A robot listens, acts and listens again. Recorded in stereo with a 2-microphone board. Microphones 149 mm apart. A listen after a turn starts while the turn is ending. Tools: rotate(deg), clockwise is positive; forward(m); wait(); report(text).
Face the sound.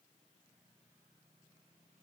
wait()
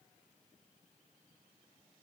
wait()
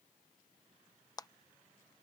rotate(-25)
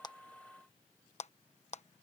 rotate(-130)
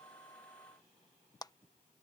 rotate(-25)
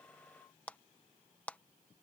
rotate(-10)
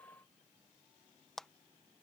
report("Found it: a clap, straight ahead.")